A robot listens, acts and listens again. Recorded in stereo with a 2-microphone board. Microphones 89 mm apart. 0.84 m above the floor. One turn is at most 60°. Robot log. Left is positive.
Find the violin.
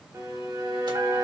note: The violin: about 45° right or 135° right.
cmd yaw -45
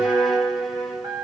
end: Found it: a violin, straight ahead.